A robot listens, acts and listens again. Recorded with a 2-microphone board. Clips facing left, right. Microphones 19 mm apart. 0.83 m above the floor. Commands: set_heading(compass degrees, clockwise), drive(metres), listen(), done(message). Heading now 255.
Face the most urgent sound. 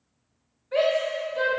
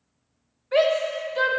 set_heading(280)
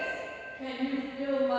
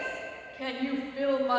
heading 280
set_heading(40)
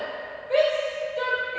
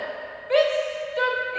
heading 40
set_heading(75)
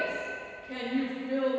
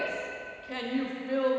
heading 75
set_heading(105)
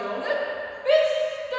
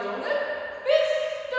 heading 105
done("Found it: a shout, straight ahead, 1 to 2 m away.")